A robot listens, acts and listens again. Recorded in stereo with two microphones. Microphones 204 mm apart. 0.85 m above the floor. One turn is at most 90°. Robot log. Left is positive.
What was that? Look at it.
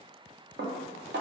note: The dishes clattering: about 60° right or 120° right.
cmd yaw -60
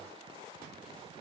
cmd idle
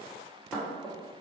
end: Found it: dishes clattering, straight ahead.